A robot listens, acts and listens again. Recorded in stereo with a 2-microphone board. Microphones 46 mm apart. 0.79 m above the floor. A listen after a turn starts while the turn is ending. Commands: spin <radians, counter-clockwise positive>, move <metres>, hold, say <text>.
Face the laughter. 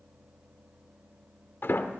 hold
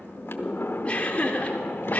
spin 0.61
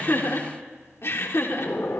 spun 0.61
spin 1.92
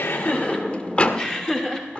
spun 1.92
spin 0.26
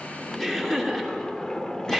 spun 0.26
say Found it: laughter, straight ahead, 2 to 4 m away.